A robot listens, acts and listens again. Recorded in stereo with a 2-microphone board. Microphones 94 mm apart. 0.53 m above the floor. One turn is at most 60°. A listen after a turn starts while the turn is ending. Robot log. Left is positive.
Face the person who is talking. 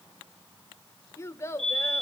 note: The child speaking: about 30° left or 150° left.
cmd yaw +30
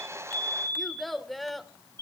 end: Facing the child speaking, 1 to 2 m away.